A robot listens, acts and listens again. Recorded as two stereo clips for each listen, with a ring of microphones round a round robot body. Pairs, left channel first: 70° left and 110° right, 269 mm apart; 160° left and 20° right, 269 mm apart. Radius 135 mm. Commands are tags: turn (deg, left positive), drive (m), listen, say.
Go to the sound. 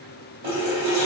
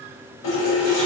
<turn deg="-165"/>
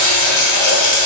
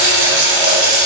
<turn deg="25"/>
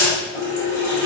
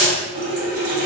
<turn deg="-10"/>
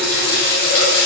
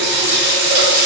<drive m="1.0"/>
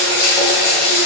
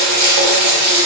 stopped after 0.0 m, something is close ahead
<say>Blocked. The running tap is further on, straight ahead.</say>